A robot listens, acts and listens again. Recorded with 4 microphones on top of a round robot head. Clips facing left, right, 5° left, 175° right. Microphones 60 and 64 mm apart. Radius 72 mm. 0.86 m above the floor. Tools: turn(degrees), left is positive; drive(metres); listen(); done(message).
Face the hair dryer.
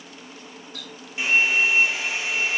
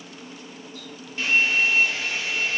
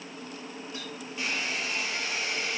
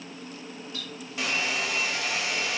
turn(degrees=170)
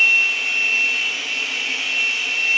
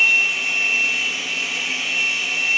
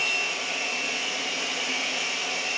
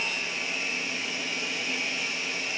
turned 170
done("Found it: a hair dryer, straight ahead.")